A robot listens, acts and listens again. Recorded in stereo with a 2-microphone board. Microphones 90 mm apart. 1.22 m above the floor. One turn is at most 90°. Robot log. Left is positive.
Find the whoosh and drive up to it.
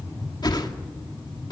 note: The whoosh: about 50° left or 130° left.
cmd yaw +50
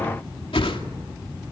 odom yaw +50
note: So it is at 80° left.
cmd yaw +80
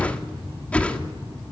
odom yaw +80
note: The whoosh is now 15° left.
cmd yaw +15
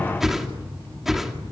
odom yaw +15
cmd fwd 1.0
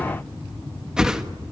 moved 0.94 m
cmd fwd 1.0
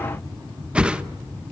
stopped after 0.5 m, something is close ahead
note: The whoosh is now 10° right.
cmd yaw -10
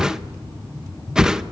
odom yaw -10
end: Arrived at the whoosh, straight ahead.